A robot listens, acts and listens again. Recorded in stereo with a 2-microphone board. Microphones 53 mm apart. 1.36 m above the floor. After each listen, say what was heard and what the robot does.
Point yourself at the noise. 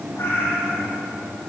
The cat meowing: about 50° left or 130° left. Turn 50° left.
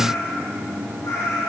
So it is at 75° left. Turn 75° left.
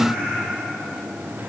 Keep listening.
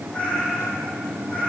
The cat meowing is now 25° left. Turn 25° left.
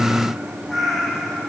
Found it: a cat meowing, straight ahead, over 4 m away.